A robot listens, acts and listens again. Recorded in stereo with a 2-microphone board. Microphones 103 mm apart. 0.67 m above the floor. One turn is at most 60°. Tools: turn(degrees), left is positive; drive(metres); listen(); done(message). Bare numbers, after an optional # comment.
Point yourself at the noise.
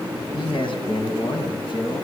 # The man speaking: about 55° left or 125° left.
turn(55)
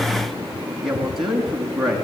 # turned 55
done("Found it: a man speaking, straight ahead, over 4 m away.")